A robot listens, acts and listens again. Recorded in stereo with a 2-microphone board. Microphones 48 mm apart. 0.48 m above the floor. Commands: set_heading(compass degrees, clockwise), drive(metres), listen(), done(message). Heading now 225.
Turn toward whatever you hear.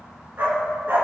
set_heading(270)
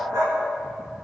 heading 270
set_heading(355)
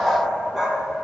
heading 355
set_heading(5)
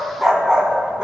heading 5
set_heading(25)
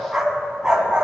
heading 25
set_heading(45)
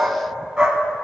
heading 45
set_heading(60)
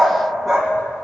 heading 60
done("Found it: a dog barking, straight ahead, 1 to 2 m away.")